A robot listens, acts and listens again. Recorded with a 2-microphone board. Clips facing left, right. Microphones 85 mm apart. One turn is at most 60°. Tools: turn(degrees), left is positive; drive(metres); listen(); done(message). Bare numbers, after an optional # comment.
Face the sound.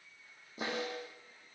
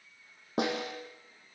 turn(-60)
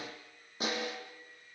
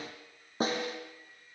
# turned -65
# So it is at 40° right.
turn(-40)
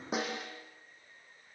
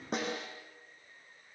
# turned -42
done("Facing the snare drum, over 4 m away.")